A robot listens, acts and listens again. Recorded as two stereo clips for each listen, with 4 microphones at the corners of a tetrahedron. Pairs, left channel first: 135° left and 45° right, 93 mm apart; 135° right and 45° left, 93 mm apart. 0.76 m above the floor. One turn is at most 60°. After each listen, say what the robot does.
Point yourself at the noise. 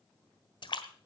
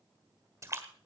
Turn 60° left.
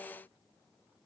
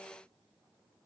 Turn 45° left.
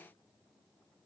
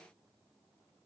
I heard a splash from this way, but can't make it out now.